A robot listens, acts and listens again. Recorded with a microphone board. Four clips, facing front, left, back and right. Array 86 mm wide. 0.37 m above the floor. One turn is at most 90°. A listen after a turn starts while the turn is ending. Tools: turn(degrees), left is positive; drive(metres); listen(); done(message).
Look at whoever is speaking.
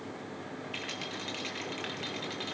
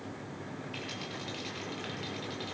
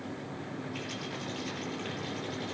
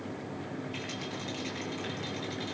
listen()
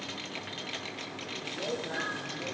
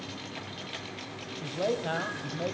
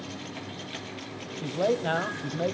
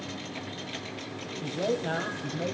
turn(degrees=90)
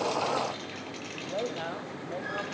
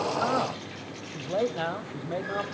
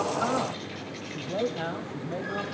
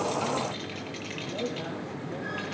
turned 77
turn(degrees=90)
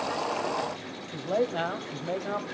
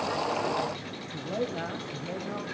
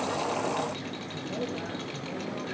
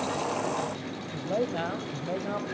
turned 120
turn(degrees=-25)
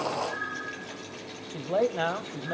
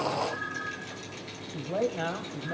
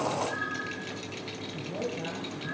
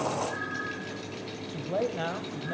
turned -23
done("Facing the man speaking.")